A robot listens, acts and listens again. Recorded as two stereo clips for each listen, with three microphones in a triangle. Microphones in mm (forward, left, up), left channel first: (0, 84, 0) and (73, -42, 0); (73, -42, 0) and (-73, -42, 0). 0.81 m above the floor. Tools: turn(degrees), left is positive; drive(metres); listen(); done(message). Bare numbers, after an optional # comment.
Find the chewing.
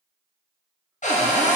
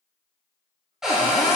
listen()
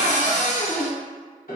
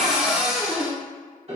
listen()
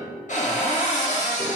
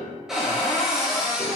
done("I can't make out chewing, only a piano and a cupboard door.")